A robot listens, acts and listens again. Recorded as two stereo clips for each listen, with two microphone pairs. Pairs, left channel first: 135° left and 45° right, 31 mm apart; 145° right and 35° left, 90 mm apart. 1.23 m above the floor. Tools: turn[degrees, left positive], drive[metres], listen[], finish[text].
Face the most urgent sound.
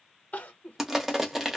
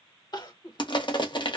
Thought: The crying: 175° left.
Action: turn[175]
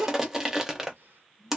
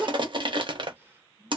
Thought: The crying is now 35° right.
Action: turn[-35]
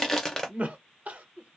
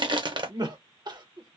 Action: finish[Found it: crying, straight ahead.]